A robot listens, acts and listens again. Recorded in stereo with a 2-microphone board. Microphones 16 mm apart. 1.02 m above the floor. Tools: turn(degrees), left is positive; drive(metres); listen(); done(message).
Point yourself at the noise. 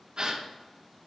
turn(degrees=-50)
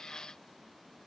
listen()
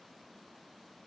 done("I heard a gasp, but can't make it out now. It was about straight ahead or 80° right.")